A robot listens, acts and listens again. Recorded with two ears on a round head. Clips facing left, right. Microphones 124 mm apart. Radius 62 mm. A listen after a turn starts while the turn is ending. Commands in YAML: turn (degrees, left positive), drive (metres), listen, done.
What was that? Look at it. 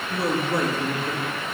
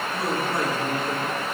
turn: 90
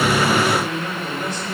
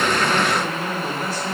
turn: -10
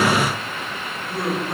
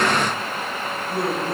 done: "Facing the man speaking, 2 to 4 m away."